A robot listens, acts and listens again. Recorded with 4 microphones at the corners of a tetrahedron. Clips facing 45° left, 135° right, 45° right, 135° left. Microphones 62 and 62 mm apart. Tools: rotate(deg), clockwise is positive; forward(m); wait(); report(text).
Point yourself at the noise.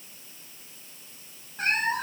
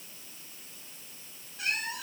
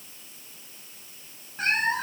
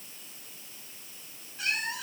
report("Facing the cat meowing.")